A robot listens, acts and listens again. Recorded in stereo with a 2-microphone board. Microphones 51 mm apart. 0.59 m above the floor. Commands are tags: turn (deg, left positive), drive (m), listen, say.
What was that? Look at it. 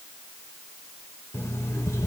<turn deg="70"/>
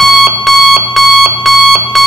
<say>Found it: an alarm clock, straight ahead.</say>